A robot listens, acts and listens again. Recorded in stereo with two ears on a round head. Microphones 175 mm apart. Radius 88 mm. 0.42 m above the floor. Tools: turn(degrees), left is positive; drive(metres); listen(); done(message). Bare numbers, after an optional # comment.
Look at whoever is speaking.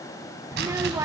# The child speaking: about 15° right or 165° right.
turn(-15)
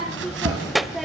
done("Found it: a child speaking, straight ahead.")